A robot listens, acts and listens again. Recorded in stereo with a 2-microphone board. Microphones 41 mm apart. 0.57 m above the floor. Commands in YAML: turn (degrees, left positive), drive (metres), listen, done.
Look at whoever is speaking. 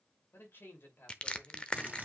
turn: 65
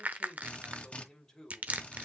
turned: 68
turn: 15
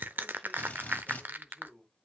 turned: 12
done: "Facing the man speaking."